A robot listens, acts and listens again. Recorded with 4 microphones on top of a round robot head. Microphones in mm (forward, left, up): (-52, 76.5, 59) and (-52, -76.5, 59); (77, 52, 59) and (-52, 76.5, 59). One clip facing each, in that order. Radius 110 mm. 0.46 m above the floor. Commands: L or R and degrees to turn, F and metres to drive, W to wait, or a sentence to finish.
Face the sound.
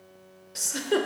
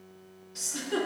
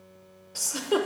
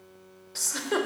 L65
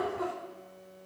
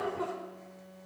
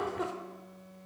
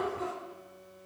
Found it: a giggle, straight ahead.